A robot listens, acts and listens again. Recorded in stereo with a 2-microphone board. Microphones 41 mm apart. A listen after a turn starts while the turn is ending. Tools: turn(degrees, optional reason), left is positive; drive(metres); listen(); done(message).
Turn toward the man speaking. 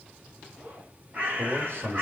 turn(degrees=-60, reason="The man speaking: about 60° right or 120° right.")
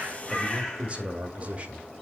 turn(degrees=-35, reason="So it is at 35° right.")
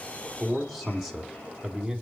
turn(degrees=-10, reason="The man speaking is now 10° right.")
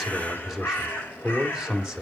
turn(degrees=-15, reason="The man speaking is now 15° right.")
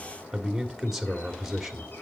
done("Found it: a man speaking, straight ahead, 1 to 2 m away.")